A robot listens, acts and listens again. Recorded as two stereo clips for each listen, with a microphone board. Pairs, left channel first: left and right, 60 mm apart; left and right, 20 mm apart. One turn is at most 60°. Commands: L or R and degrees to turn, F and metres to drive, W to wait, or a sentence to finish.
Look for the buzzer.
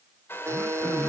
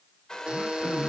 R50
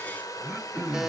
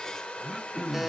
W
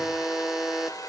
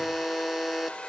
R10
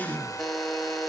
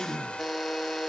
Facing the buzzer.